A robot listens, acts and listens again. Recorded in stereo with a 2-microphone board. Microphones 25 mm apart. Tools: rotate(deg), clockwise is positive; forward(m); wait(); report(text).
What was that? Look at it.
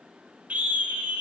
rotate(90)
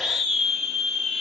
report("Found it: a scream, straight ahead.")